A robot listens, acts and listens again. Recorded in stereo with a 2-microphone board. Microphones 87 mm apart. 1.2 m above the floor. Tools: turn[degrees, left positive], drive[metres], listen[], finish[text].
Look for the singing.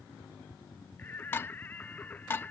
Thought: The singing: about 20° left or 160° left.
Action: turn[20]
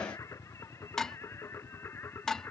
Thought: The singing: about 25° left or 155° left.
Action: turn[25]
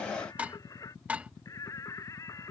Thought: So it is at 140° left.
Action: turn[140]
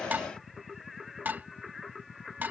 Action: finish[Found it: singing, straight ahead.]